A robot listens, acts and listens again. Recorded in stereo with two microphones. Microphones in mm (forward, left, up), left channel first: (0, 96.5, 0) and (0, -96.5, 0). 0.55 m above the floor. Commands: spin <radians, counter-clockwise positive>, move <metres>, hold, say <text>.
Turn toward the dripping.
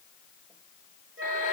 hold
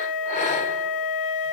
hold
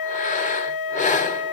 say I can't make out dripping, only breathing and a flute.